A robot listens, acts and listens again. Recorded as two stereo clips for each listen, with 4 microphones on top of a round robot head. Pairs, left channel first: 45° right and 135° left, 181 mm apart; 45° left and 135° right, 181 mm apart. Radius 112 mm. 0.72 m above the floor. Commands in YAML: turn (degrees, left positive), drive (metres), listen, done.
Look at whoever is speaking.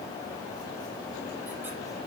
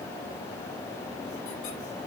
listen: true
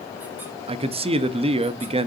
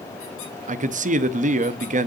turn: -175
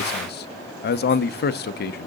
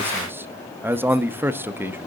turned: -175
turn: -55
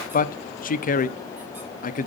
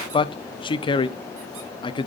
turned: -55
turn: -15
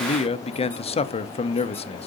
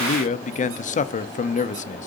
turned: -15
done: "Found it: a man speaking, straight ahead."